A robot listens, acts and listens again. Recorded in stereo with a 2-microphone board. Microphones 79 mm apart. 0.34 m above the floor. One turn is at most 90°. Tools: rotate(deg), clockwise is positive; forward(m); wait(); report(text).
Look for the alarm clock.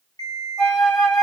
rotate(-55)
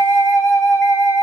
wait()
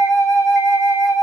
wait()
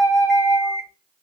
report("Found it: an alarm clock, straight ahead, 1 to 2 m away.")